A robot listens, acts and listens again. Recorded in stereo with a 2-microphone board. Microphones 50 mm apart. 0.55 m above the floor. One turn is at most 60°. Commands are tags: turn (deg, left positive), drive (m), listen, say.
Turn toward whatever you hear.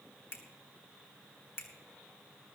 <turn deg="55"/>
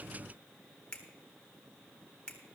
<turn deg="25"/>
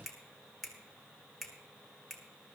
<say>Facing the finger snap.</say>